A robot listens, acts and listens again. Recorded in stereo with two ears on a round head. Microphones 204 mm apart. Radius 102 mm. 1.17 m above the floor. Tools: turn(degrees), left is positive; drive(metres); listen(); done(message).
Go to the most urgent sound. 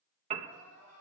turn(degrees=30)
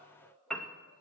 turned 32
turn(degrees=140)
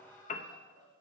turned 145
drive(metres=1.0)
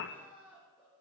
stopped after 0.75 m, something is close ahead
done("Something is in my way. I am facing the crying but have not reached it.")